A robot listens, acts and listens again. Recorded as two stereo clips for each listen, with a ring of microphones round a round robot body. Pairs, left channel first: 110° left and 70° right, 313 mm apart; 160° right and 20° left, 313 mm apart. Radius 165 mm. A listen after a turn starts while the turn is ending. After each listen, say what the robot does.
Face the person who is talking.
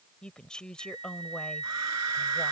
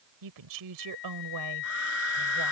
Turn 25° left.
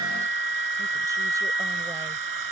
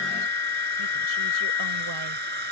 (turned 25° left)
Keep listening.
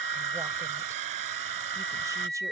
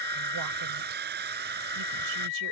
Keep listening.
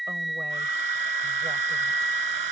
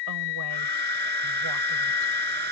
I heard a woman speaking from this way, but can't make it out now.